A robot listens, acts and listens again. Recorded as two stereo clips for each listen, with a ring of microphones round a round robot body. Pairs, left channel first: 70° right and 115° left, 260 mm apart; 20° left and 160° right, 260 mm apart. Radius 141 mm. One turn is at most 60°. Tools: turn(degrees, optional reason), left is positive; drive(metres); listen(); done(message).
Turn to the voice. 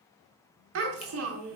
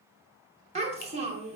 turn(degrees=60, reason="The child speaking: 140° left.")
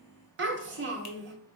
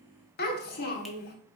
turn(degrees=60, reason="The child speaking is now 70° left.")
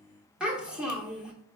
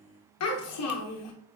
turn(degrees=25, reason="The child speaking is now 25° left.")
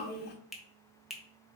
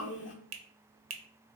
turn(degrees=-20, reason="The child speaking is now 20° right.")
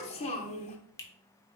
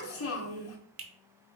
done("Found it: a child speaking, straight ahead, under 1 m away.")